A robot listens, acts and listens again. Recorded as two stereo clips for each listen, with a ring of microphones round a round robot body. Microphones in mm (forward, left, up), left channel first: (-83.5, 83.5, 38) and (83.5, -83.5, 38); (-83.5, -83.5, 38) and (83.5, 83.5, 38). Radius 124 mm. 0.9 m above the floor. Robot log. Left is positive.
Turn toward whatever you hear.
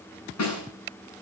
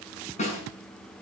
note: The snare drum: 160° left.
cmd yaw +160
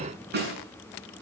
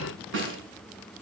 end: Facing the snare drum.